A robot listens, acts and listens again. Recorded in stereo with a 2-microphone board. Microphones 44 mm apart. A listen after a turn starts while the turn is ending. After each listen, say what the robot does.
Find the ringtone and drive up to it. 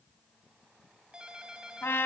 Turn 20° right.
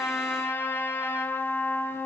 Keep listening.
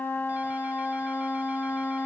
Keep listening.
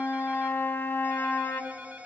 Turn 140° right.
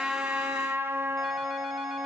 Keep listening.
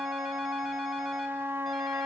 Keep listening.
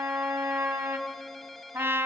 Drive 1.0 m forward.
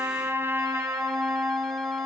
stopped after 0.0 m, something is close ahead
Keep listening.
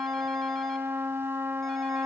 Keep listening.
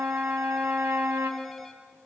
Facing where the ringtone came from. I can't hear it now. I did not reach it.